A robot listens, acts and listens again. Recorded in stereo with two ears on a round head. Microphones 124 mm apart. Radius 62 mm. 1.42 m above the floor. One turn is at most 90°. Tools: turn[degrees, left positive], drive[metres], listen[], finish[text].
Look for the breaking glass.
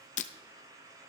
Thought: The breaking glass: about 55° left or 125° left.
Action: turn[55]
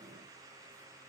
Action: listen[]
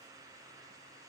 Action: finish[I heard breaking glass, but can't make it out now. It was about straight ahead or 70° left.]